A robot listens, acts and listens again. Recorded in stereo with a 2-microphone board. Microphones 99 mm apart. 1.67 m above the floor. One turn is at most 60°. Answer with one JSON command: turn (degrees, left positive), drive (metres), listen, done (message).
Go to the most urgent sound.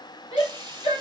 {"turn": 60}
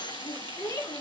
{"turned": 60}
{"turn": 35}
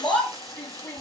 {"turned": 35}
{"turn": 15}
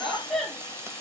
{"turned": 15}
{"drive": 1.0}
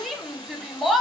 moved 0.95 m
{"drive": 1.0}
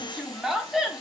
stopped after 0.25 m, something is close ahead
{"done": "Arrived at the shout, straight ahead."}